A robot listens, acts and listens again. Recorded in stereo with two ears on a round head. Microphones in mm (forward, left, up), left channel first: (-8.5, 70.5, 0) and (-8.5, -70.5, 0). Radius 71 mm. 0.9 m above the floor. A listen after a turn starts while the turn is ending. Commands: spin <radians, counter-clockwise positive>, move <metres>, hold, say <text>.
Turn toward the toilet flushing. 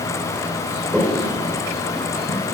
spin -0.52
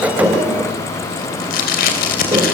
hold
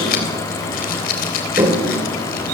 spin -2.53
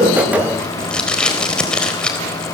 hold
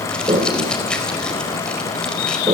spin -0.52
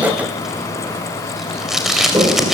spin -0.44
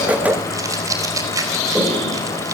say Facing the toilet flushing.